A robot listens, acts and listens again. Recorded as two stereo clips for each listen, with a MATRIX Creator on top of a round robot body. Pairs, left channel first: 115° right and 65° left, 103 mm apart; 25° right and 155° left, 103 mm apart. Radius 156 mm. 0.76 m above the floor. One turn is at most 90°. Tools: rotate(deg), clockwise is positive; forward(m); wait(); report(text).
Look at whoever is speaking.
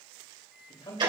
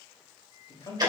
rotate(70)
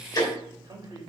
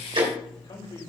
rotate(-15)
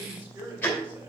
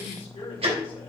report("Found it: a man speaking, straight ahead, over 4 m away.")